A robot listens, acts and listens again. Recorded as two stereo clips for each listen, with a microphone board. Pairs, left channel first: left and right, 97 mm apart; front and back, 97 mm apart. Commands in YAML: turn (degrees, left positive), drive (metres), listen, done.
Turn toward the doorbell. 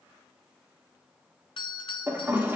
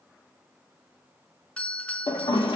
turn: 75
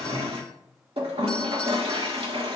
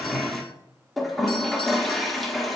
listen: true
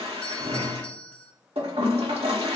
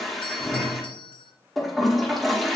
turn: 10
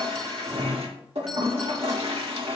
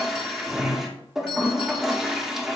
listen: true
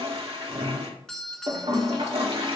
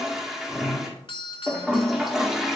done: "Facing the doorbell."